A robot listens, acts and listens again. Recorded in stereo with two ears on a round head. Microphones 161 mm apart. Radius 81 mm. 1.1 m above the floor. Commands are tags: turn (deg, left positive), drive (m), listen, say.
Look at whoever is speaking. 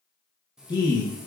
<turn deg="25"/>
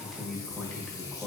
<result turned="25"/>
<say>Found it: a man speaking, straight ahead.</say>